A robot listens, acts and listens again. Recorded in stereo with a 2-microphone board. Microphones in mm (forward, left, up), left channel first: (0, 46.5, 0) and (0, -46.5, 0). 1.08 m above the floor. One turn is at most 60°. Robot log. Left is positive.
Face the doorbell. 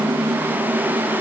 cmd idle
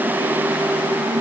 cmd idle
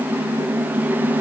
end: I can't make out a doorbell.